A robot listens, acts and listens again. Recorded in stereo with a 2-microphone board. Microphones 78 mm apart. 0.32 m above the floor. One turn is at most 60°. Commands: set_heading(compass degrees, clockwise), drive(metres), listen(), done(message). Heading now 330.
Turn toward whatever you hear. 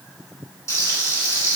set_heading(290)
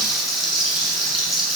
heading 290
done("Found it: frying, straight ahead, 1 to 2 m away.")